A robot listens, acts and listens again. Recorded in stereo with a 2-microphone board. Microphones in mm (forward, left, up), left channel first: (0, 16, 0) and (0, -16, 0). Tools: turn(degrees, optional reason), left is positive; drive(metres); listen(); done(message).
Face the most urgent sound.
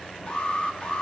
turn(degrees=30, reason="The alarm: about 30° left or 150° left.")
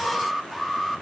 done("Facing the alarm.")